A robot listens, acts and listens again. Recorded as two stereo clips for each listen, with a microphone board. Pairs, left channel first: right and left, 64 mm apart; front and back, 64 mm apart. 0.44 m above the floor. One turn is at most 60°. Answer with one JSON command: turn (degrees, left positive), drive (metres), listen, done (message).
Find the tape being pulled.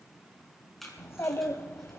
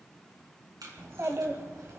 {"turn": -60}
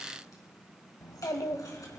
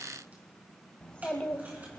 {"turn": -60}
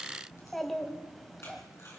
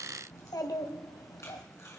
{"turn": -45}
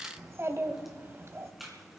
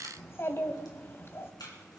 {"done": "Facing the tape being pulled, 2 to 4 m away."}